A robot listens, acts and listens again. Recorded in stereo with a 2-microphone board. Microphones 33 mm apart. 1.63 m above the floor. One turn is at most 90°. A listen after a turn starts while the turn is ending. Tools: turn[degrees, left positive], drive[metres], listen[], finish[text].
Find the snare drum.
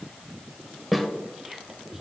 Action: turn[30]
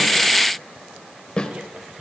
Thought: So it is at 150° left.
Action: turn[90]
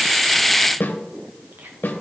Thought: The snare drum is now 85° left.
Action: turn[85]
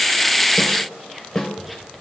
Thought: The snare drum is now 15° left.
Action: turn[15]
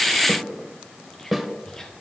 Action: finish[Found it: a snare drum, straight ahead, 1 to 2 m away.]